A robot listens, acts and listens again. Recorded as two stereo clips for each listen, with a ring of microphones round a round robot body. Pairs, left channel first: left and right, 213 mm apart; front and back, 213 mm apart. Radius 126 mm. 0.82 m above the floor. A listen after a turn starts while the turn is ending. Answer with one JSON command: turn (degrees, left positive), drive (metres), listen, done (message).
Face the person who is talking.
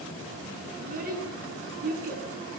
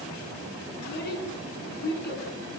{"turn": -40}
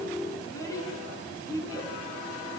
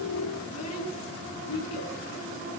{"turn": 15}
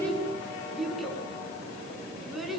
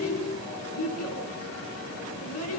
{"done": "Found it: a child speaking, straight ahead, over 4 m away."}